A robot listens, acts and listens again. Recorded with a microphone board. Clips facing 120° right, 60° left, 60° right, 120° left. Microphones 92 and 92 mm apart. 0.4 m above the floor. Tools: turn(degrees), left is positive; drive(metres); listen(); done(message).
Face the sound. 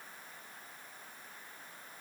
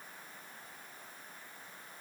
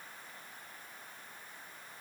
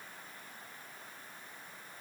listen()
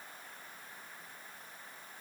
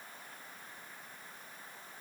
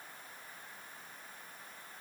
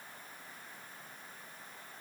listen()
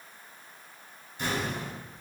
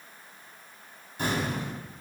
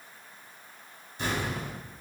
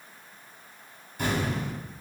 turn(degrees=80)
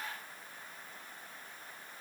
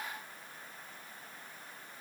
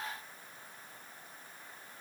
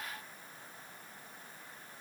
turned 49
turn(degrees=35)
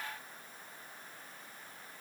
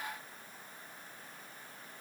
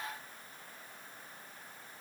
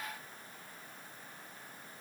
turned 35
done("Facing where the explosion came from. I can't hear it now.")